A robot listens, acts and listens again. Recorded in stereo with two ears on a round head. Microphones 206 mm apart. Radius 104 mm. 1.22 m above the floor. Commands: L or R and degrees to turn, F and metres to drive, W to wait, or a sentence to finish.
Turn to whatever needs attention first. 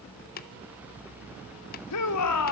L90
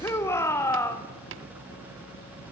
L10
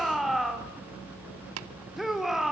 Found it: a shout, straight ahead.